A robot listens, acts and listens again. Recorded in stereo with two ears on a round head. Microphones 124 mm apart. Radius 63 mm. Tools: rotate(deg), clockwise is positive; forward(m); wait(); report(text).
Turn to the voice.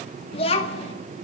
rotate(-40)
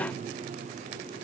wait()
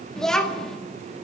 report("Facing the child speaking, 1 to 2 m away.")